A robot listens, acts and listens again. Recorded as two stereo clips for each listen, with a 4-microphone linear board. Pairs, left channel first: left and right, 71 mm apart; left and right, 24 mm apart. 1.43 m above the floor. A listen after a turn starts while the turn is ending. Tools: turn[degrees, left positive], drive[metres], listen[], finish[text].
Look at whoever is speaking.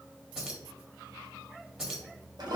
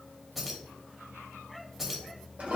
Action: listen[]
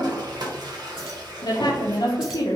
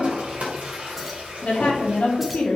Thought: The woman speaking: about 65° left or 115° left.
Action: turn[65]
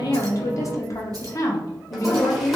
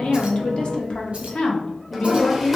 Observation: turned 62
Thought: So it is at 50° left.
Action: turn[50]
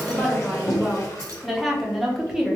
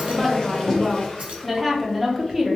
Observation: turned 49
Action: finish[Found it: a woman speaking, straight ahead.]